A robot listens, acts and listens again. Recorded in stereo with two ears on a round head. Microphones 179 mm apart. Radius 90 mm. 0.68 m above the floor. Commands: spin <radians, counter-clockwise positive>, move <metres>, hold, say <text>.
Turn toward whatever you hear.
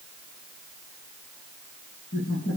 spin 1.05
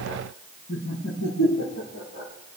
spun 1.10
spin 1.22
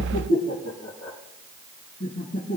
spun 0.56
spin 0.87
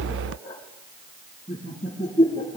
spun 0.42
spin 0.44
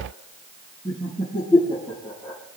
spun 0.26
spin 0.17
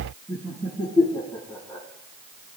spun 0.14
say Found it: laughter, straight ahead.